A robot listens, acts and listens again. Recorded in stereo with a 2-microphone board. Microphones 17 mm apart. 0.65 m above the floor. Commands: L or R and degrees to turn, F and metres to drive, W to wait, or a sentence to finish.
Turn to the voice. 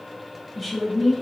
L30
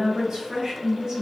R30
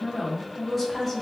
Facing the woman speaking, 1 to 2 m away.